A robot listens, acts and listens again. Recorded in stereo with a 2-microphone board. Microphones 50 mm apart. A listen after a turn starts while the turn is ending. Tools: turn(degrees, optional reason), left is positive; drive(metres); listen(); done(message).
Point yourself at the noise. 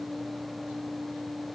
listen()
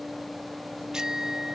turn(degrees=-30)
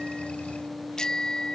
turn(degrees=15, reason="So it is at 15° left.")
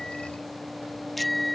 done("Found it: a bicycle bell, straight ahead.")